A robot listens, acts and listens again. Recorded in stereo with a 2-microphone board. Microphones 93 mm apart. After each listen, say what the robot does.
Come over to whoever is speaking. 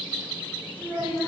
Turn 20° right.
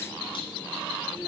Keep listening.
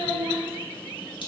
Turn 140° right.
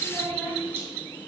Drive 1.0 m forward.
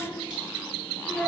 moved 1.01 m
Drive 1.0 m forward.
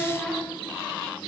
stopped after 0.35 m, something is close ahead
Turn 10° left.
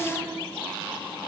I am next to the child speaking.